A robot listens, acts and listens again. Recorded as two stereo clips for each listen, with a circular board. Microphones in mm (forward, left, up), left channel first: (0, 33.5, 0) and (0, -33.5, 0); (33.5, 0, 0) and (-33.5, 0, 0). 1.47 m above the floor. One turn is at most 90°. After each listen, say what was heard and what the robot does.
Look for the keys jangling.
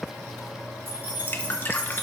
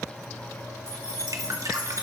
The keys jangling: 30° right. Turn 30° right.
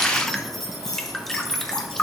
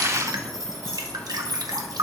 The keys jangling is now 10° left. Turn 10° left.
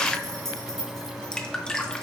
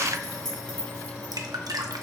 The keys jangling is now 10° left. Turn 10° left.
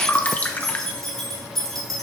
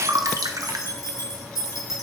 Found it: keys jangling, straight ahead, 2 to 4 m away.